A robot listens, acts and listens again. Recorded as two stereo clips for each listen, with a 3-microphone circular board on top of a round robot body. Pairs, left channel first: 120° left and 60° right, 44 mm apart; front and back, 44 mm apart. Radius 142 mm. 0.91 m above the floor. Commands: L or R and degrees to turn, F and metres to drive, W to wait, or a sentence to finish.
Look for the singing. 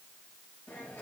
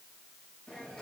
W
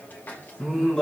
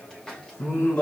L40
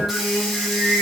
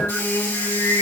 Facing the singing.